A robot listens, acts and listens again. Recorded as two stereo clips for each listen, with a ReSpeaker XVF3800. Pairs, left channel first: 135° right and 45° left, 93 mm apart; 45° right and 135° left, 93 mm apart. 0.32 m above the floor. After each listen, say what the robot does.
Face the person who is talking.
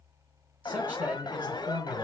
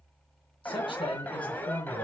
Turn 25° right.
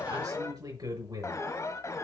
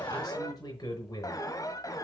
Facing the man speaking.